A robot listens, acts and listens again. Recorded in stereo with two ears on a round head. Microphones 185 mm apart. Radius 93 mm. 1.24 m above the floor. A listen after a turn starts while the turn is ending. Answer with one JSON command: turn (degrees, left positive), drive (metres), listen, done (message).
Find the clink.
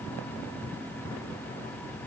{"listen": true}
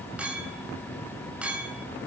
{"turn": -30}
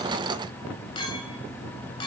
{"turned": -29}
{"turn": 25}
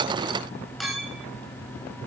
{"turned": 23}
{"done": "Found it: a clink, straight ahead."}